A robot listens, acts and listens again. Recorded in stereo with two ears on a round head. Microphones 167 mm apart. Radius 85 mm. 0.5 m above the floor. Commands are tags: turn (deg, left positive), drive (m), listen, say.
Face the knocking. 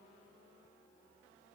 <listen/>
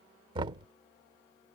<turn deg="-25"/>
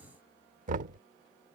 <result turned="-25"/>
<turn deg="-130"/>
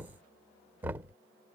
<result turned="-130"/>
<turn deg="-10"/>
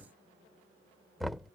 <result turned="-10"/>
<say>Found it: knocking, straight ahead.</say>